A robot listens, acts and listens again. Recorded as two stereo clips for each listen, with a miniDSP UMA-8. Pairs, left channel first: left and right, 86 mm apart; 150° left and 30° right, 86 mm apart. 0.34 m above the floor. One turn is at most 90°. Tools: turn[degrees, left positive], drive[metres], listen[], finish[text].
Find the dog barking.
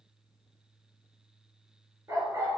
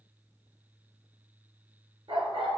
Thought: The dog barking: 40° right.
Action: turn[-40]
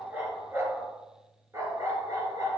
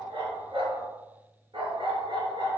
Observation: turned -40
Thought: The dog barking is now 45° right.
Action: turn[-45]
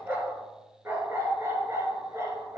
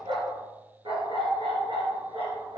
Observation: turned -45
Thought: The dog barking is now 35° right.
Action: turn[-35]
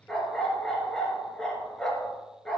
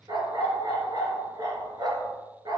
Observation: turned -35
Thought: The dog barking is now 10° left.
Action: turn[10]
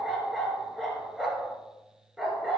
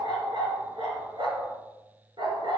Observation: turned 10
Action: finish[Found it: a dog barking, straight ahead.]